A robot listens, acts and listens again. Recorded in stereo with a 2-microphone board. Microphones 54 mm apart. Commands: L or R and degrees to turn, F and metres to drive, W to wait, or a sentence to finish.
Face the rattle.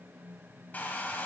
W
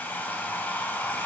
W
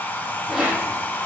R30
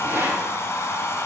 R140
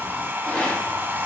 L20
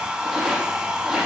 Facing the rattle, 2 to 4 m away.